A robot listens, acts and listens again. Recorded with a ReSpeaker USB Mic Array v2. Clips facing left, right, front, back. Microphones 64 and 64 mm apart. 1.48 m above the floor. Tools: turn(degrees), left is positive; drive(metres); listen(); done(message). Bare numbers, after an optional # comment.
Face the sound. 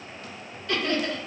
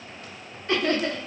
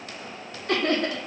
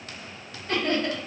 # The laughter: 30° right.
turn(-30)
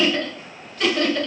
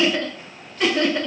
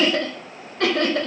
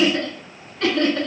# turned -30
# The laughter is now 15° right.
turn(-15)
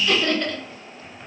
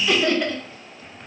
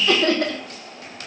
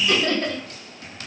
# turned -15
# The laughter is now 10° right.
turn(-10)
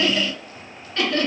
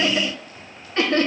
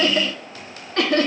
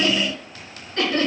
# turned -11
# The laughter is now 30° right.
turn(-30)
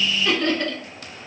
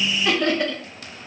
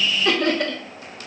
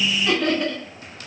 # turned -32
# The laughter is now 10° right.
turn(-10)
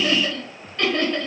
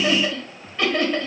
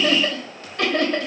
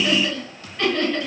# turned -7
done("Found it: laughter, straight ahead.")